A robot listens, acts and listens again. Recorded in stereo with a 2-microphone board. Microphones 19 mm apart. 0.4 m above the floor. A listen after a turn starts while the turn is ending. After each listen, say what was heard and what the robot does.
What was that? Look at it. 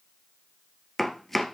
Turn 30° left.
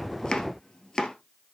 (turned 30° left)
So it is at 140° left. Turn 140° left.
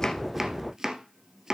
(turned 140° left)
The chopping is now 30° right. Turn 30° right.
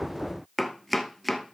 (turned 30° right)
Found it: chopping, straight ahead, 1 to 2 m away.